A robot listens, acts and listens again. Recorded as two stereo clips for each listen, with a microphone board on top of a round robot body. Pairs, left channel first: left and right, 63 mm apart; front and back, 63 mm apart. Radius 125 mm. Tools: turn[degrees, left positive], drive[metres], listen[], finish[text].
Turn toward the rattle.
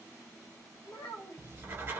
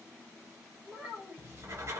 Action: listen[]
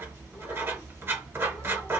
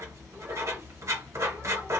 Action: listen[]
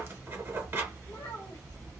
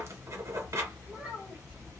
Action: finish[I can't make out a rattle, only a child speaking and writing.]